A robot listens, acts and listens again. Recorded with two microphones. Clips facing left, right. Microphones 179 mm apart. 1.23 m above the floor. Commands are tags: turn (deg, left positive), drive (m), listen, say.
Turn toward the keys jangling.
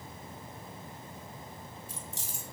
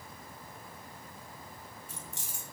<turn deg="-90"/>
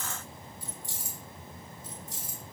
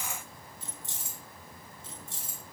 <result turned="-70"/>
<turn deg="-30"/>
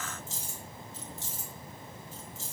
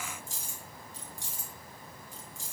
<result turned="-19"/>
<turn deg="-15"/>
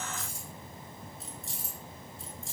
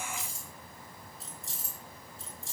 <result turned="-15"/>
<say>Facing the keys jangling, over 4 m away.</say>